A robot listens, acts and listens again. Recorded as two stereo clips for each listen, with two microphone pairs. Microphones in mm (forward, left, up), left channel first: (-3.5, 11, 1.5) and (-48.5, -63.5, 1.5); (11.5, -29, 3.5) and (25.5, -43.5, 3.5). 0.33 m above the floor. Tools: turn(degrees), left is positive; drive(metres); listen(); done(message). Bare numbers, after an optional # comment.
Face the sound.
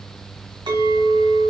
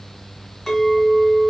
# The clink: 140° right.
turn(-140)
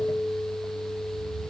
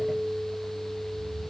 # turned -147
done("Found it: a clink, straight ahead, 1 to 2 m away.")